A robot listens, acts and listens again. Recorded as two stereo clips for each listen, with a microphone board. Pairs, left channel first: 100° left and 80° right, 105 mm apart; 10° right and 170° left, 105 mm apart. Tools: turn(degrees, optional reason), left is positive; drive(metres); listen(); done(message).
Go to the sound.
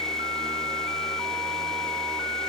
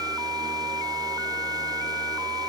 listen()
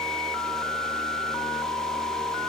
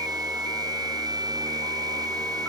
listen()
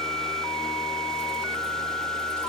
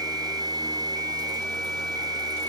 done("I can't make out anything to turn to.")